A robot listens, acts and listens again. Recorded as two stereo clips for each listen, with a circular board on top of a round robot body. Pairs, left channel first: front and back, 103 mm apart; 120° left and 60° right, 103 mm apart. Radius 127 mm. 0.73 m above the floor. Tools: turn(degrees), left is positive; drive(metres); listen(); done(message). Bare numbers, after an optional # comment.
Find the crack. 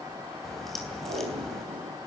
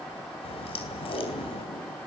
# The crack: 90° left.
turn(90)
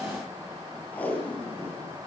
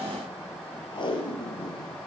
done("I heard a crack from this way, but can't make it out now.")